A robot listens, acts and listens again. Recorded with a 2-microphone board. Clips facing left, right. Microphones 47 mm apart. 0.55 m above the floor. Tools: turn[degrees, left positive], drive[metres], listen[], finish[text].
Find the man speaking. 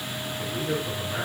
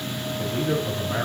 Thought: The man speaking: about 70° right or 110° right.
Action: turn[-70]
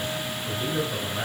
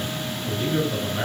Thought: So it is at 10° right.
Action: turn[-10]
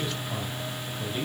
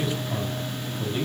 Action: finish[Found it: a man speaking, straight ahead.]